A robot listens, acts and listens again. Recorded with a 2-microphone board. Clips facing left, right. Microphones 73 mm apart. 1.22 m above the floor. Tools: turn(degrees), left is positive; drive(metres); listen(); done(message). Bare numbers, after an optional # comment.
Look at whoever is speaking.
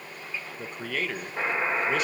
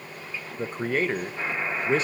# The man speaking: about 35° right or 145° right.
turn(-35)
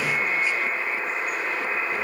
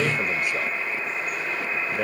listen()
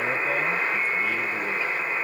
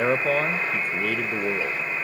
# So it is at 110° right.
turn(-110)
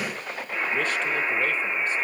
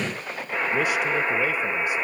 listen()
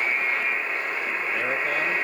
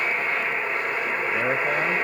listen()
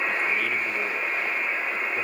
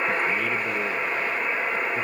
done("I heard a man speaking from this way, but can't make it out now.")